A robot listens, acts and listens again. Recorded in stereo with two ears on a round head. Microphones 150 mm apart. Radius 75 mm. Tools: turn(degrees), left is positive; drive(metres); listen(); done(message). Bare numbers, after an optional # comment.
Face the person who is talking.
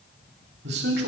# The man speaking: about 70° right or 110° right.
turn(-70)
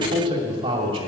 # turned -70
# So it is at 35° right.
turn(-35)
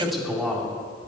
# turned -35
done("Facing the man speaking, 2 to 4 m away.")